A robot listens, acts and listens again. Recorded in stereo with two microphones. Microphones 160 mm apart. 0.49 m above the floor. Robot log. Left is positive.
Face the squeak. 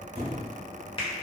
note: The squeak: about 45° right or 135° right.
cmd yaw -45
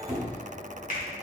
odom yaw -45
note: So it is at 10° right.
cmd yaw -10
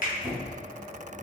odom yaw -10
end: Found it: a squeak, straight ahead, under 1 m away.